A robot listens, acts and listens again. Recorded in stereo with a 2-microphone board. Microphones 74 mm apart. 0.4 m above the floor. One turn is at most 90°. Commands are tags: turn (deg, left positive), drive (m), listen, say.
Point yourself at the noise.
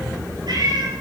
<turn deg="-65"/>
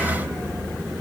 <listen/>
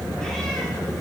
<listen/>
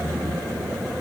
<say>I heard a cat meowing, but can't make it out now. It was about straight ahead or 50° right.</say>